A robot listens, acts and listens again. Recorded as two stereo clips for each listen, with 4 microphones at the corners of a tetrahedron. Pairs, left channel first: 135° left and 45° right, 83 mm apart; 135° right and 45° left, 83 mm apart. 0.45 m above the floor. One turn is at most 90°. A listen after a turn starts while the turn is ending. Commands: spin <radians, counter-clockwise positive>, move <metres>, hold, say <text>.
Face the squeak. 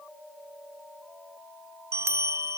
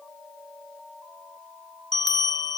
hold
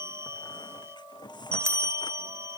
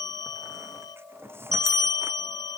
spin 1.57
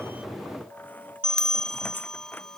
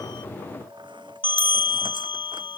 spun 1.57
spin 0.26
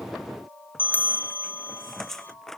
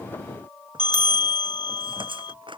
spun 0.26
spin 0.87
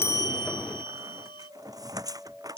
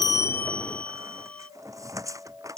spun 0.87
say Facing the squeak.